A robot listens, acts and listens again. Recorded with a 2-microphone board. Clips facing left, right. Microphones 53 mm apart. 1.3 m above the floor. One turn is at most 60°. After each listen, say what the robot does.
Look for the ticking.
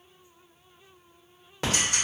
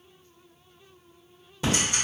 Turn 60° left.
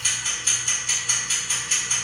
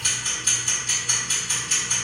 Found it: ticking, straight ahead.